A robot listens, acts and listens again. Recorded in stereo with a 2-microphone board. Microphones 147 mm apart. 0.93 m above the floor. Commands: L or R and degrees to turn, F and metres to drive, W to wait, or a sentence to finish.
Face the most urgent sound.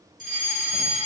L65
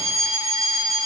L35
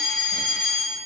Facing the fire alarm, over 4 m away.